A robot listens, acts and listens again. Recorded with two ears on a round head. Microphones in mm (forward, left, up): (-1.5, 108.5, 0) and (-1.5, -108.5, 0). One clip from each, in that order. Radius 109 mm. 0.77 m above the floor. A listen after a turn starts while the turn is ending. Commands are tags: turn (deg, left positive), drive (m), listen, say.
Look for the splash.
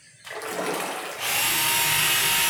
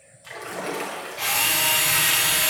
<turn deg="15"/>
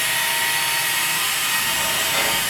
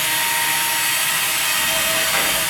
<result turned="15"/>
<listen/>
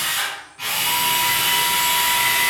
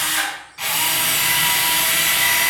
<say>I heard a splash, but can't make it out now. It was about straight ahead or 150° left.</say>